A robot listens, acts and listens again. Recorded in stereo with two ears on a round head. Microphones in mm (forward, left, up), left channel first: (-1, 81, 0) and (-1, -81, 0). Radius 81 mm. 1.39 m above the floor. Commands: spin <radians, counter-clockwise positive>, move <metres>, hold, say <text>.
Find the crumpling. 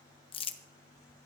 spin 0.52
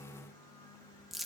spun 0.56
say Facing the crumpling.